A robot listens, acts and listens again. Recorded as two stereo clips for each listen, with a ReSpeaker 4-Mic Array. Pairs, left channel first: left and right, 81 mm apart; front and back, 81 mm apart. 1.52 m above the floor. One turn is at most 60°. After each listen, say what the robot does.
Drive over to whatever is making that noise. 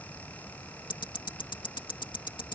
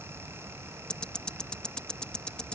Turn 60° left.
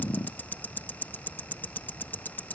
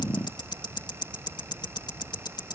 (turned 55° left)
Turn 25° left.
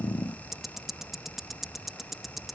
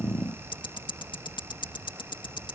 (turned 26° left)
Drive 1.0 m forward.
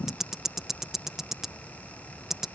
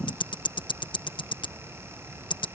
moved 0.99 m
Drive 1.0 m forward.
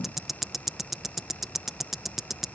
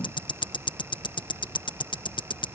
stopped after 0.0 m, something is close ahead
I am next to the ticking.